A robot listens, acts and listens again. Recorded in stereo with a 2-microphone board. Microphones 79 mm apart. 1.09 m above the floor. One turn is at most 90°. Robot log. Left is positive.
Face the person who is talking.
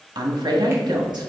note: The woman speaking: about 60° right or 120° right.
cmd yaw -60
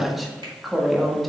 end: Facing the woman speaking.